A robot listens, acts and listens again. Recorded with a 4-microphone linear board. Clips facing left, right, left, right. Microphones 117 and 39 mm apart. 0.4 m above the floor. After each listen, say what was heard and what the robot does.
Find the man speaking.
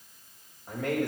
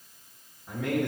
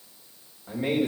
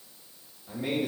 The man speaking: about 45° left or 135° left. Turn 45° left.
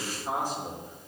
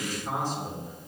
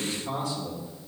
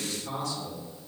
So it is at 10° left. Turn 10° left.
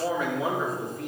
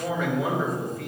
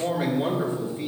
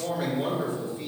Facing the man speaking.